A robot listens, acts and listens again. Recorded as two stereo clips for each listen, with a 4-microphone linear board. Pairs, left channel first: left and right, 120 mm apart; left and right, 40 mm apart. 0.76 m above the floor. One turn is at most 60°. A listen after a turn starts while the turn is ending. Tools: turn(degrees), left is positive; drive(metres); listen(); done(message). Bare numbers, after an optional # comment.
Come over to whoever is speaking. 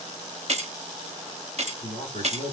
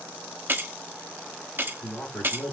# The man speaking: about 45° left or 135° left.
turn(45)
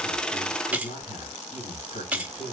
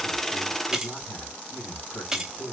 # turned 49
# So it is at 85° left.
turn(60)
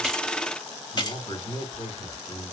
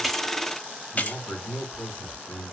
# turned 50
# The man speaking is now 40° left.
turn(40)
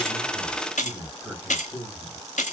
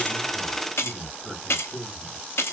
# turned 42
drive(1.0)
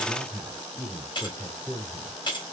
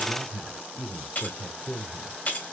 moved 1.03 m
drive(1.0)
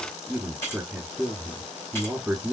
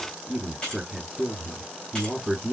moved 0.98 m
# The man speaking is now 10° right.
turn(-10)
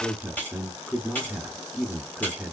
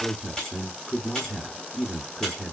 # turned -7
drive(1.0)
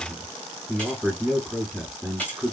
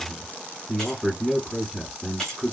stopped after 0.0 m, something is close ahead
done("I am next to the man speaking.")